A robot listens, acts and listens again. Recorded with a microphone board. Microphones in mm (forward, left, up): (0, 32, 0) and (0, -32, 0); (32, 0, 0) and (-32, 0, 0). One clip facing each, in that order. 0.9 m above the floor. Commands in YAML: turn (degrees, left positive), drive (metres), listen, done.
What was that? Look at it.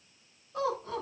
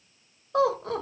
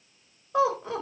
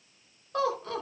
turn: -75
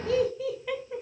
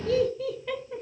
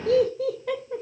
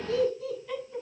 turn: 10
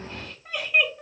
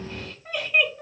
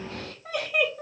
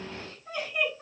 done: "Facing the laughter, 2 to 4 m away."